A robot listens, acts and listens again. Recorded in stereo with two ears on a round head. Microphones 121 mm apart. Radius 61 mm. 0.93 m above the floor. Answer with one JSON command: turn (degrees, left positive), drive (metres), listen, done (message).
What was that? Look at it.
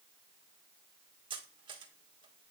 {"turn": -35}
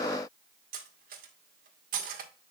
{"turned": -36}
{"turn": -105}
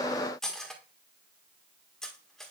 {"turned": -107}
{"done": "Found it: cutlery clinking, straight ahead."}